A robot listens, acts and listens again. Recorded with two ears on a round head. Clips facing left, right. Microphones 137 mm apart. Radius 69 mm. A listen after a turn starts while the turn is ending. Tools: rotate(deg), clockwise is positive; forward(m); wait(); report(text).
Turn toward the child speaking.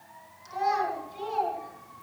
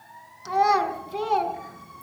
rotate(75)
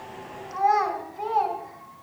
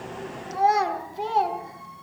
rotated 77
rotate(30)
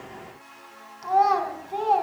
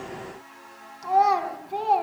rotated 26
report("Facing the child speaking, over 4 m away.")